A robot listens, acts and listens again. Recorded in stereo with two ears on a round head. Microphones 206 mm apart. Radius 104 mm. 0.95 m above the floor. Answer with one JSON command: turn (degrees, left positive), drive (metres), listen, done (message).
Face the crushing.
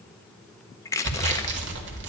{"turn": 30}
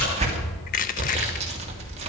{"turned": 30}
{"turn": 135}
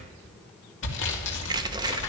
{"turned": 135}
{"listen": true}
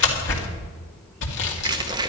{"turn": -20}
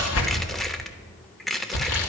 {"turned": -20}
{"done": "Found it: crushing, straight ahead."}